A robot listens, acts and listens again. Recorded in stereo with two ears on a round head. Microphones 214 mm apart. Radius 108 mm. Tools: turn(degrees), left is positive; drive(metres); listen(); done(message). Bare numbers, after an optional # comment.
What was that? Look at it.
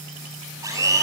turn(-30)
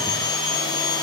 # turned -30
# So it is at 15° left.
turn(15)
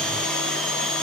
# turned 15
done("Found it: a blender, straight ahead, over 4 m away.")